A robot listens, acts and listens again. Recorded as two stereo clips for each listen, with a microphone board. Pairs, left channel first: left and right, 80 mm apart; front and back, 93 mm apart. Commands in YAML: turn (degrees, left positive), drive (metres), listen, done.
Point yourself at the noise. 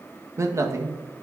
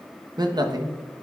turn: -140
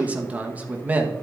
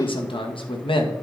turn: -20
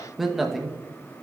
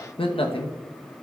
done: "Found it: a man speaking, straight ahead, 1 to 2 m away."